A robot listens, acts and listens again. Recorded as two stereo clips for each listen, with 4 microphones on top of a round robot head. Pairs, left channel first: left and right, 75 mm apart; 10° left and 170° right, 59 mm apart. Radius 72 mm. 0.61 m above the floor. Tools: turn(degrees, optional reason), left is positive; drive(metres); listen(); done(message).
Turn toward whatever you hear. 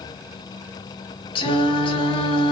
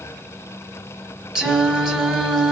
turn(degrees=110, reason="The singing: 110° left.")
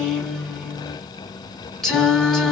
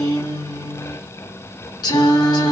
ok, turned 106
done("Found it: singing, straight ahead.")